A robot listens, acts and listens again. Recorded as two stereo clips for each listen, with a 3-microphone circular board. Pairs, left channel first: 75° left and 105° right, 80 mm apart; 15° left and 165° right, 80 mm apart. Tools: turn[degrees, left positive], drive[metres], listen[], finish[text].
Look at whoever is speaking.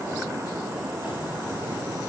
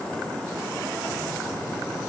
Action: listen[]
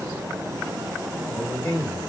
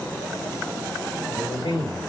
Thought: The man speaking: 25° left.
Action: turn[25]
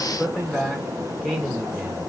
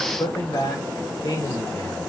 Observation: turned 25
Action: finish[Facing the man speaking.]